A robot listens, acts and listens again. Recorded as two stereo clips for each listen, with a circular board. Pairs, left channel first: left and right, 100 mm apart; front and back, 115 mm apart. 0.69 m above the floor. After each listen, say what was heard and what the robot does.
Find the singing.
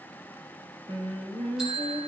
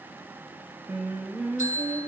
The singing: 105° right. Turn 105° right.
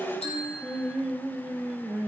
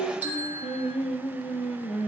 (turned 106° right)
The singing is now 20° right. Turn 20° right.
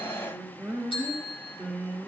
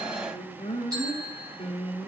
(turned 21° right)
The singing is now 10° right. Turn 10° right.
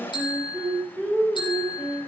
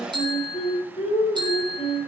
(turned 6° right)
Facing the singing.